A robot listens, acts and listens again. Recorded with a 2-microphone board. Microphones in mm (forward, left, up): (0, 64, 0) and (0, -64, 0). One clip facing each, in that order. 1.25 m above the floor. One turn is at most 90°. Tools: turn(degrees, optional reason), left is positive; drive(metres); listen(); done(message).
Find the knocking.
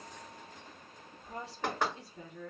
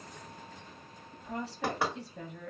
turn(degrees=-30)
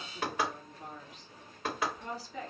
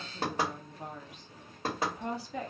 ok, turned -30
turn(degrees=-90, reason="So it is at 140° right.")
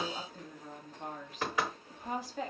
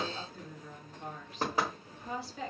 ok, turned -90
turn(degrees=-35, reason="The knocking is now 35° right.")
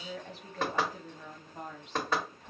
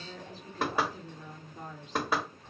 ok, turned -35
done("Facing the knocking, 1 to 2 m away.")